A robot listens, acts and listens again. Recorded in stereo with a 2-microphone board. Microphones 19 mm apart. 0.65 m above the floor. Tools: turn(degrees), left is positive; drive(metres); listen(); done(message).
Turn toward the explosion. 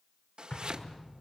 turn(degrees=45)
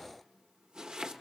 listen()
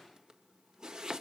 done("I heard an explosion, but can't make it out now. It was about straight ahead or 90° left.")